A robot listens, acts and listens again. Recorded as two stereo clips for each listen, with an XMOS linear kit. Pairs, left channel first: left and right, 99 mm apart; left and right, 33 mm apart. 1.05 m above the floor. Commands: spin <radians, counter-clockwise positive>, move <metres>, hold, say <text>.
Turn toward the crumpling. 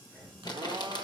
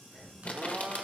spin 0.87
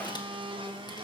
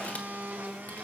hold
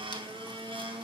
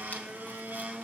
hold
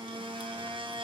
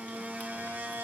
say I heard crumpling, but can't make it out now. It was about straight ahead or 80° left.